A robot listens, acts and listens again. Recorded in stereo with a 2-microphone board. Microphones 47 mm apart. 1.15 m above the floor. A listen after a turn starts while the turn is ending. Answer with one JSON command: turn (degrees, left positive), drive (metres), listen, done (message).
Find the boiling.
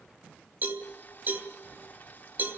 {"turn": 40}
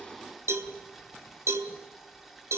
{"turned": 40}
{"done": "Found it: boiling, straight ahead, 2 to 4 m away."}